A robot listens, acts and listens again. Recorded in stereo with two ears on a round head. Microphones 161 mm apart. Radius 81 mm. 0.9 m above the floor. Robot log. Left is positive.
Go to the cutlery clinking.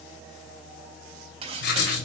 note: The cutlery clinking: about 35° right or 145° right.
cmd yaw -35
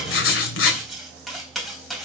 cmd fwd 1.0
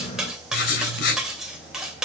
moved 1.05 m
cmd fwd 1.0
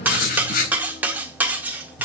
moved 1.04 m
note: The cutlery clinking is now 10° right.
cmd yaw -10
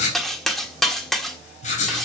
cmd fwd 1.0
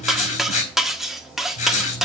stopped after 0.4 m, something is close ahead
end: I am next to the cutlery clinking.